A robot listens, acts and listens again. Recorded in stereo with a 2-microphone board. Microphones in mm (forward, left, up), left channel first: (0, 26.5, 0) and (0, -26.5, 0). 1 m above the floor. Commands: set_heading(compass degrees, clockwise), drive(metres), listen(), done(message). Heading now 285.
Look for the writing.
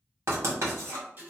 set_heading(350)
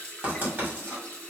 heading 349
set_heading(24)
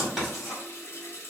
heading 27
done("Facing the writing, 1 to 2 m away.")